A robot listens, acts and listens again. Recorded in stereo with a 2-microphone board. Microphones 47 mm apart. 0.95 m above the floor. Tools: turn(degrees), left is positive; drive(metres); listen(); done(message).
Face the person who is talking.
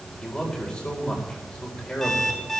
turn(degrees=20)
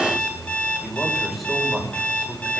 done("Facing the man speaking.")